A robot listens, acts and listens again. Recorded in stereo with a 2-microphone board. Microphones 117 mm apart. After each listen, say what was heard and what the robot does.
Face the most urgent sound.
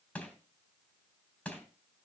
Keep listening.
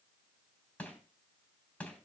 Keep listening.
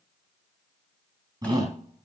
The shout: about 35° right or 145° right. Turn 35° right.
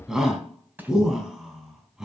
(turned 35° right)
Found it: a shout, straight ahead.